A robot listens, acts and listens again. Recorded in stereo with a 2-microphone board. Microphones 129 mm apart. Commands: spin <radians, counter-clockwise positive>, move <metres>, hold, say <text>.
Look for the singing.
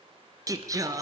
spin -0.44
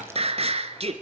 spin -2.18
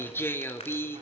spin 0.35
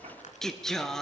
say Found it: singing, straight ahead.